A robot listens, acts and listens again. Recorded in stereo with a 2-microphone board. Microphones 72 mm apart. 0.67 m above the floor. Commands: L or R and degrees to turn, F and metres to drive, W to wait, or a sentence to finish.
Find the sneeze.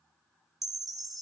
W
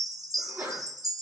R25
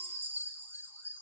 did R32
W
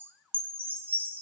I heard a sneeze, but can't make it out now. It was about 10° left or 125° right.